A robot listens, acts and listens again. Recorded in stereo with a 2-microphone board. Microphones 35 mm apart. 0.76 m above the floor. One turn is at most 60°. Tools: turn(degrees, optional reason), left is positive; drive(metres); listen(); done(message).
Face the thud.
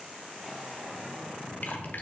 listen()
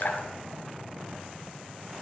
listen()
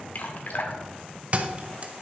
turn(degrees=-35, reason="The thud: about 35° right or 145° right.")
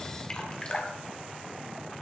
listen()
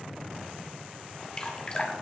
done("I heard a thud, but can't make it out now. It was about straight ahead or 110° right.")